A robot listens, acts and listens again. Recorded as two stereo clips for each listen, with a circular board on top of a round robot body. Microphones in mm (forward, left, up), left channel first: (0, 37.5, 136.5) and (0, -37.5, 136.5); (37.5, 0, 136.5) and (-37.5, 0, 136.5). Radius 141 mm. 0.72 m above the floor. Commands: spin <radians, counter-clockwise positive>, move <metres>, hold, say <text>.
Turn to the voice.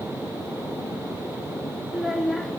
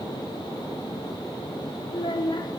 say Facing the child speaking.